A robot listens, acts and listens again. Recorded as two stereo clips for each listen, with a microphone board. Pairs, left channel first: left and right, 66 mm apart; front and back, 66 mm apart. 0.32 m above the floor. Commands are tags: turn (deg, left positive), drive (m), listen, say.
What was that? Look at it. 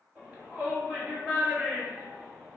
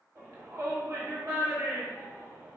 <turn deg="-155"/>
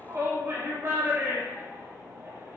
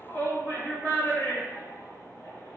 <turn deg="-45"/>
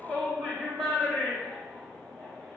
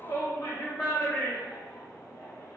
<say>Facing the shout.</say>